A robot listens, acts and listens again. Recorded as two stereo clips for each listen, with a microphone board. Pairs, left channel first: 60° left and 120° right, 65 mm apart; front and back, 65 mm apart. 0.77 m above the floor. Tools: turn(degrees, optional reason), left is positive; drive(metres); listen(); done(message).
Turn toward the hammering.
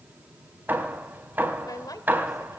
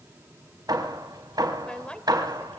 turn(degrees=180, reason="The hammering: straight behind.")
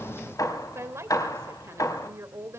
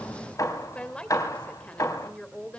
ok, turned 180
turn(degrees=30, reason="The hammering is now 30° left.")
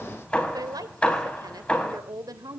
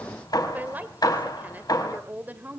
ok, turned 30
turn(degrees=-10, reason="The hammering is now 10° right.")
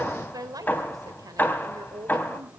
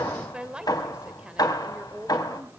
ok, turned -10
done("Found it: hammering, straight ahead, 2 to 4 m away.")